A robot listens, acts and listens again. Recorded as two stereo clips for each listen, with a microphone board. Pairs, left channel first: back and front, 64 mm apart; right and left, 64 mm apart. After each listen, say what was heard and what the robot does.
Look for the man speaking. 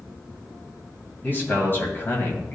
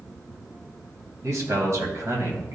The man speaking: 130° left. Turn 130° left.
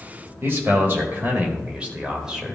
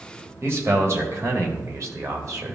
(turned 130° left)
The man speaking is now 80° left. Turn 80° left.
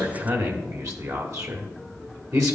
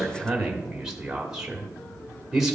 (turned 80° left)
The man speaking is now 10° left. Turn 10° left.
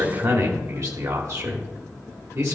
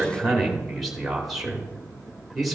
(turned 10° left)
Found it: a man speaking, straight ahead.